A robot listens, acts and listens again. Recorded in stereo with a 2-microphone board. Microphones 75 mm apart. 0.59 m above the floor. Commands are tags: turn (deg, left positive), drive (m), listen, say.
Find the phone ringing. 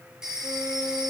<turn deg="-30"/>
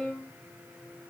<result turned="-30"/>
<listen/>
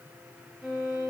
<listen/>
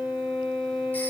<say>I heard a phone ringing, but can't make it out now. It was about 20° left or 140° right.</say>